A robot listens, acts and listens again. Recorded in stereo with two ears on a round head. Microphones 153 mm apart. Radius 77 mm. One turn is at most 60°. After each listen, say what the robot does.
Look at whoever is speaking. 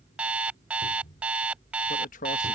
Turn 50° left.
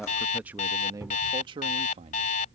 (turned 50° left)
Turn 35° right.
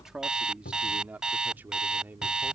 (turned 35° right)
Turn 10° right.
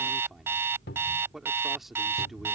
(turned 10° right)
Found it: a man speaking, straight ahead.